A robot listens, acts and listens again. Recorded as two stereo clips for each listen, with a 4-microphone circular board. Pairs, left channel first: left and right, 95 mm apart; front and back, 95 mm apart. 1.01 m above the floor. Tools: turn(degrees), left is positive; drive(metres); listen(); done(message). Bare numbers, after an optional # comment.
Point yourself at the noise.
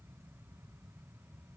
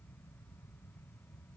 listen()
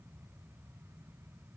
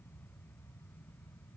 listen()
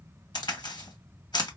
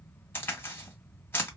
# The crack: 65° left.
turn(65)
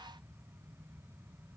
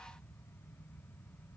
done("Facing where the crack came from. I can't hear it now.")